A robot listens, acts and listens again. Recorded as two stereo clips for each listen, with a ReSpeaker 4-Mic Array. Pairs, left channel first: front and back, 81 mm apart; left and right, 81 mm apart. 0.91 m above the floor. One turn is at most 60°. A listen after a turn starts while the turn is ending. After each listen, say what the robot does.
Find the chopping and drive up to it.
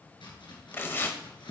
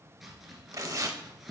Drive 1.0 m forward.
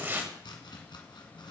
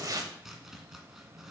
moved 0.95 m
Drive 1.0 m forward.
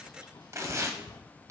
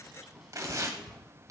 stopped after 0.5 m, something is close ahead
I am next to the chopping.